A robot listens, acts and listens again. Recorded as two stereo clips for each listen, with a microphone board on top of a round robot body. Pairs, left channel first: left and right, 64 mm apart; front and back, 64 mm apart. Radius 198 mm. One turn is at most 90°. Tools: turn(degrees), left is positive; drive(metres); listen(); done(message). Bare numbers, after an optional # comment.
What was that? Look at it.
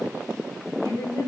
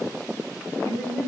# The woman speaking: 55° left.
turn(55)
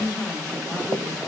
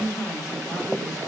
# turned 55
# The woman speaking is now 20° left.
turn(20)
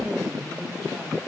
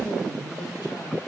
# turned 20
done("Facing the woman speaking, 2 to 4 m away.")